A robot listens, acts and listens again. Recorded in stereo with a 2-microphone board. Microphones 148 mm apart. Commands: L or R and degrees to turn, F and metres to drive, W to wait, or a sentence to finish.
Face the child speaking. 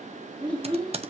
R30
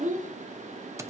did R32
R120
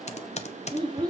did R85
R35
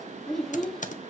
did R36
Facing the child speaking, 1 to 2 m away.